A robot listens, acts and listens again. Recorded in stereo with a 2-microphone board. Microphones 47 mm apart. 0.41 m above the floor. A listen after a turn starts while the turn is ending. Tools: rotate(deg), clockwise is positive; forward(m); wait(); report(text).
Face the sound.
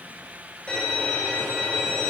rotate(-20)
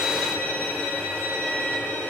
rotate(-135)
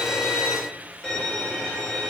rotate(-20)
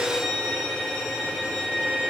report("Found it: a violin, straight ahead.")